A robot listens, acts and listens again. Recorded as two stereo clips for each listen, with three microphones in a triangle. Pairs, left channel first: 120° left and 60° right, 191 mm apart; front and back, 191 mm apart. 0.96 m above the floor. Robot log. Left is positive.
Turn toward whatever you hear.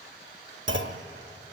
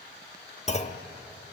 note: The clunk: 55° right.
cmd yaw -55
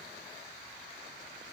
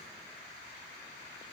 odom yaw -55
end: I heard a clunk from this way, but can't make it out now.